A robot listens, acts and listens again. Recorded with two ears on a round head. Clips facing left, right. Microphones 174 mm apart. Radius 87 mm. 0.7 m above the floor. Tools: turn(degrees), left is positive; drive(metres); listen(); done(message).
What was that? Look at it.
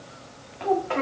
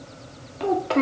turn(degrees=-45)
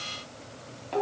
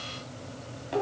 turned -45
turn(degrees=-10)
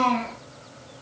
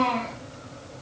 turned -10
done("Found it: a child speaking, straight ahead, under 1 m away.")